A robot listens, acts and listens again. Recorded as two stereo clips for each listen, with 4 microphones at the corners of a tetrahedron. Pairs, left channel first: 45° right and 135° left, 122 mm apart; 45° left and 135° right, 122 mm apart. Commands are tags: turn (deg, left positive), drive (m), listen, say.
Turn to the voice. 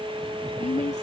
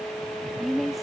<turn deg="-45"/>
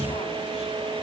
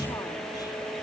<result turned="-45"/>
<listen/>
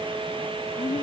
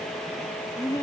<turn deg="-10"/>
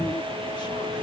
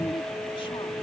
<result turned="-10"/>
<listen/>
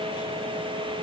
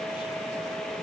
<listen/>
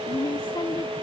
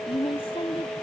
<say>Facing the woman speaking.</say>